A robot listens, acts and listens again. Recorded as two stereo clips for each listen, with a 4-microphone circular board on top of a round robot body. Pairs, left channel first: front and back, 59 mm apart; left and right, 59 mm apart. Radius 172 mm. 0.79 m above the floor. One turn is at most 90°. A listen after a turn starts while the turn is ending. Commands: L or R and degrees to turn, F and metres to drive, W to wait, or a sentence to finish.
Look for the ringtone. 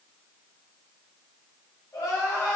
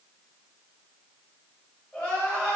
W
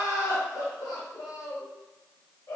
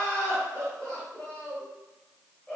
W
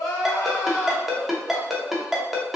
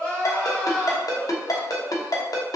L90
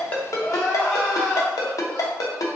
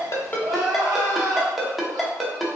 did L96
Found it: a ringtone, straight ahead.